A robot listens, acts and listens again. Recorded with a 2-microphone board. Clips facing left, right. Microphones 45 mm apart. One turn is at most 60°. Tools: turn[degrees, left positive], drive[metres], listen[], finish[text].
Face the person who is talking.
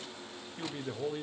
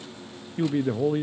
Thought: The man speaking: about 30° right or 150° right.
Action: turn[-30]
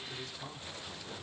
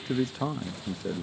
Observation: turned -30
Thought: So it is at 115° right.
Action: turn[-60]
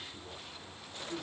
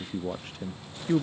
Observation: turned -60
Thought: The man speaking is now 80° right.
Action: turn[-60]
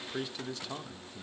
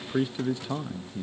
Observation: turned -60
Thought: The man speaking is now 20° right.
Action: turn[-20]
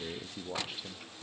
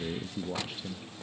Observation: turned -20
Action: finish[Found it: a man speaking, straight ahead, under 1 m away.]